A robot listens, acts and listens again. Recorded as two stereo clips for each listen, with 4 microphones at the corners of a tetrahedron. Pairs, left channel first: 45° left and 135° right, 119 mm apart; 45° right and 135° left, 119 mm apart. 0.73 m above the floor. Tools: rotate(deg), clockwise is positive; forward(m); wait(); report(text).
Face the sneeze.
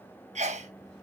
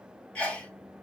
rotate(125)
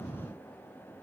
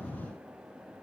report("Facing where the sneeze came from. I can't hear it now.")